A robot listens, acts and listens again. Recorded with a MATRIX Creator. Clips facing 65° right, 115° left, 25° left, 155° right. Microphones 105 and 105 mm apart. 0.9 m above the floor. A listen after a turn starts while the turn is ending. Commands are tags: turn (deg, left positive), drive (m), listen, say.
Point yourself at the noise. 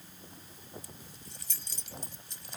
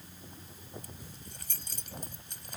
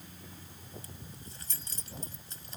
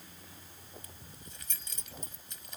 <turn deg="80"/>
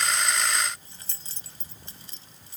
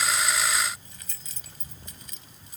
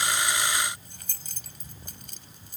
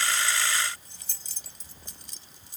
<turn deg="-10"/>
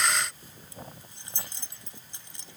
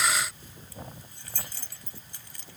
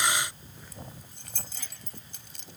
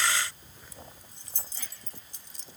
<say>Facing the keys jangling.</say>